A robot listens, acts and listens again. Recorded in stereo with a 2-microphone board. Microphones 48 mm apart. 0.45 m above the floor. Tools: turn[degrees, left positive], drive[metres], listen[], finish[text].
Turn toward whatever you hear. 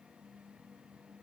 Action: listen[]
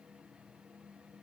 Action: listen[]
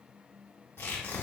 Thought: The tearing paper: about 55° left or 125° left.
Action: turn[55]
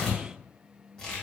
Thought: So it is at 15° left.
Action: turn[15]
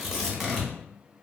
Action: finish[Facing the tearing paper, 1 to 2 m away.]